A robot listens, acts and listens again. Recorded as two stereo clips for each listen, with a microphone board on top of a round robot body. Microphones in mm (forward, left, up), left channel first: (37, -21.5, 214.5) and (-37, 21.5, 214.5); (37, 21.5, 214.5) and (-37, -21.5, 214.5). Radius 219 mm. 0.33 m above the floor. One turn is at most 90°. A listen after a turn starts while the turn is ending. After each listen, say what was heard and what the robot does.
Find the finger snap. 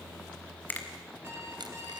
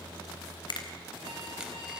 The finger snap: 35° left. Turn 35° left.
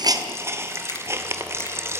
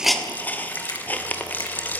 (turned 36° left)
Keep listening.
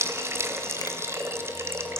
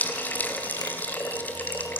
Keep listening.
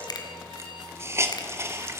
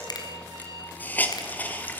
Facing where the finger snap came from. I can't hear it now.